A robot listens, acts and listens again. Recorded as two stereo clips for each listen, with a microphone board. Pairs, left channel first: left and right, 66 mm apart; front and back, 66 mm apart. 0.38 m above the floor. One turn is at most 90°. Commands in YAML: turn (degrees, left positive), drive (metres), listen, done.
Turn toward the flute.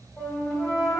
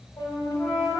turn: 25
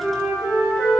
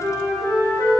done: "Found it: a flute, straight ahead."